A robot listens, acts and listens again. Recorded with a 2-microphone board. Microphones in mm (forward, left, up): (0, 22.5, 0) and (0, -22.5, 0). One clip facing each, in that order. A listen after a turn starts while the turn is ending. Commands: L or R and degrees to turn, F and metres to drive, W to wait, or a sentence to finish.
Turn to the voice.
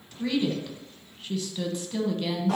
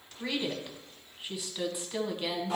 R30
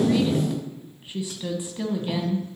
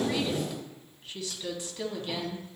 L20
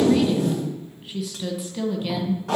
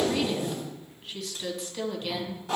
Facing the woman speaking.